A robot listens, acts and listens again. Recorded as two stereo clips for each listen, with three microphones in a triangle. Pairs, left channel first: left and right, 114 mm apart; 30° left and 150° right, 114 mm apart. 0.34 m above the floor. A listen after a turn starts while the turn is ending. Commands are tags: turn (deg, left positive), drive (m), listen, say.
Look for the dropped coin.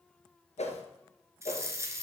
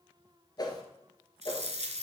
<turn deg="-155"/>
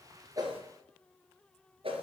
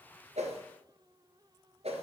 <say>Facing where the dropped coin came from. I can't hear it now.</say>